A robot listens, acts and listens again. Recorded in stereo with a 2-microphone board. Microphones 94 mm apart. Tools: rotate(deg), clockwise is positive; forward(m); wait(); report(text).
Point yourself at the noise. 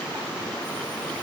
wait()
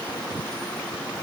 wait()
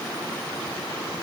report("I can't make out anything.")